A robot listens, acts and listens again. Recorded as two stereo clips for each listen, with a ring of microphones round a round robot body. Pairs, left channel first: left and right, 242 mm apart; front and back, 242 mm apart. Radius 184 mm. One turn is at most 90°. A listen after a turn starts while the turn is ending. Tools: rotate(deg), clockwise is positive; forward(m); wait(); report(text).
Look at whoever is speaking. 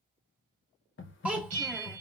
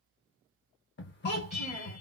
report("Found it: a child speaking, straight ahead, 1 to 2 m away.")